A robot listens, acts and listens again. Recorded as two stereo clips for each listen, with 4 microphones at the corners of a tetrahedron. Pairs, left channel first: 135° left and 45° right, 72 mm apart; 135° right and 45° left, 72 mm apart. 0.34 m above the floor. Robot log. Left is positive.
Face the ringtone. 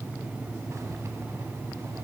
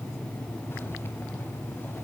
cmd idle
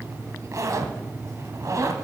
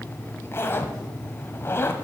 cmd idle
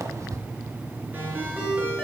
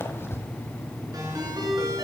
note: The ringtone: 20° left.
cmd yaw +20
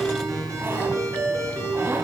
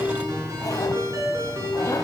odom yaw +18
end: Found it: a ringtone, straight ahead, 2 to 4 m away.